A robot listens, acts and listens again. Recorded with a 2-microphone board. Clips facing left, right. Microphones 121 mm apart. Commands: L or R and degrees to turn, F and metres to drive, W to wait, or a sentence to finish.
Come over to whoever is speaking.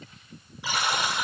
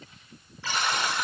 W
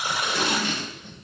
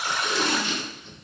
W
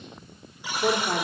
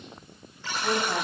L75
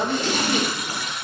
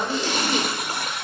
F1.0
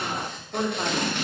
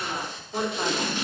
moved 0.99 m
F1.0
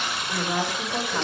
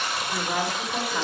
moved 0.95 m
L10
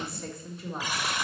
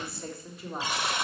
F1.0
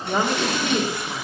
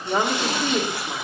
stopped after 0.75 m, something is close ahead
I am next to the woman speaking.